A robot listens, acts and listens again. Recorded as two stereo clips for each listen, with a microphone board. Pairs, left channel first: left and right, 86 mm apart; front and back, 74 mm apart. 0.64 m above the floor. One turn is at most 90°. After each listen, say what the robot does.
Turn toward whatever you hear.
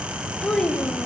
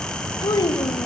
Turn 10° left.
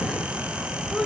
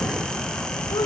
Facing the child speaking, 1 to 2 m away.